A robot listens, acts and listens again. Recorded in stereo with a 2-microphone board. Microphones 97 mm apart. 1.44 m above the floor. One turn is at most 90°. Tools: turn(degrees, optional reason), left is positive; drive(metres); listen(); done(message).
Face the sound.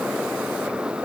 listen()
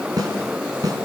turn(degrees=-40, reason="The snare drum: about 40° right or 140° right.")
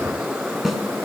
done("Found it: a snare drum, straight ahead, over 4 m away.")